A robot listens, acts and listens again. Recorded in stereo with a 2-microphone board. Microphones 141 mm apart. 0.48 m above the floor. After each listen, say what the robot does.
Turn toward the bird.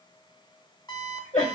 Keep listening.
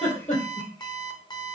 Keep listening.
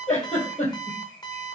I can't make out a bird to turn to.